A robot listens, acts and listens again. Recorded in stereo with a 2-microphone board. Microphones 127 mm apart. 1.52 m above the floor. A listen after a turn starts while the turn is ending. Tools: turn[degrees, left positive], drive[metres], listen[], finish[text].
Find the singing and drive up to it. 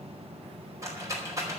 Action: listen[]
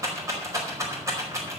Action: listen[]
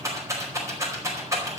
Action: finish[I can't make out singing to turn to.]